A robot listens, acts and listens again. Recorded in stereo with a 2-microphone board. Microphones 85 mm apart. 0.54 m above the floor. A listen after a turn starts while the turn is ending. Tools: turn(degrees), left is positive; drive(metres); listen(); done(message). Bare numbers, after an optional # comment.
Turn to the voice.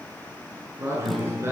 # The man speaking: about 30° right or 150° right.
turn(-30)
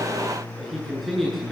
done("Facing the man speaking.")